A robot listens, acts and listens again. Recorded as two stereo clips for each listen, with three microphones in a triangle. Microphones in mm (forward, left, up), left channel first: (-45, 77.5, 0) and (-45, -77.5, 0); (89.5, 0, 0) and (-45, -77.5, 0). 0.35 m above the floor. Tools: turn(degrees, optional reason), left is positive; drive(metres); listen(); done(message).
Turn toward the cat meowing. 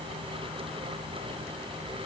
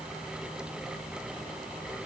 listen()
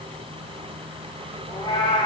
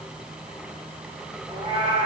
turn(degrees=155, reason="The cat meowing: 155° left.")
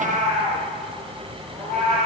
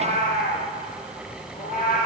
done("Found it: a cat meowing, straight ahead.")